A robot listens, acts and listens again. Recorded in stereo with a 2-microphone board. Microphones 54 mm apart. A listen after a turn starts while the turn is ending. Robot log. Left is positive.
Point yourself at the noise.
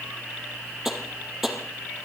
cmd yaw -30
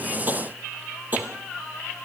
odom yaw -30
note: So it is at 145° right.
cmd yaw -145
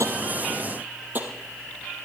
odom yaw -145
note: The tapping is now 40° right.
cmd yaw -40
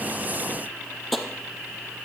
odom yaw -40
end: Found it: tapping, straight ahead, 2 to 4 m away.